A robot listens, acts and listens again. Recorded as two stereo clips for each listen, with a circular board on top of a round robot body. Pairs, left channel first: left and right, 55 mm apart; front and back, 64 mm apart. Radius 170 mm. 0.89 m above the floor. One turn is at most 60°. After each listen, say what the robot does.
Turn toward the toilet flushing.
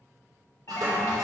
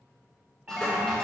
Turn 60° right.
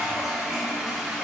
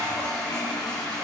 Turn 15° right.
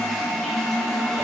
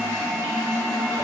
Facing the toilet flushing.